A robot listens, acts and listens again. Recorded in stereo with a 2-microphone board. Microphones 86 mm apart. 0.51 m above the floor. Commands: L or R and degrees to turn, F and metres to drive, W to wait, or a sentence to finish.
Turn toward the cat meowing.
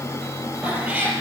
R15
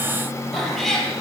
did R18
Found it: a cat meowing, straight ahead.